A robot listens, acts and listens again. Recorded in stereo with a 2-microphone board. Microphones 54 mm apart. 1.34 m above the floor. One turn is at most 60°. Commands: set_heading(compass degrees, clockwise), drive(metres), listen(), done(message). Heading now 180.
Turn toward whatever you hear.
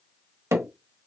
set_heading(240)
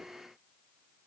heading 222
listen()
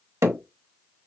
set_heading(282)
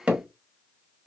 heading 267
set_heading(292)
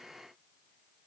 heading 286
listen()
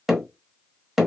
done("Facing the hammering, 1 to 2 m away.")